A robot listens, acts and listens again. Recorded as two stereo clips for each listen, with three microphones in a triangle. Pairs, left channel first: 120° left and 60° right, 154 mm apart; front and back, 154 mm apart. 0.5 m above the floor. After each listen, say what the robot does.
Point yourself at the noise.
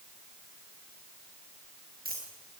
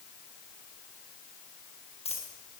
Turn 50° right.
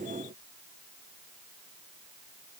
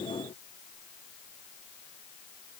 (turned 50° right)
I heard a dropped coin from this way, but can't make it out now.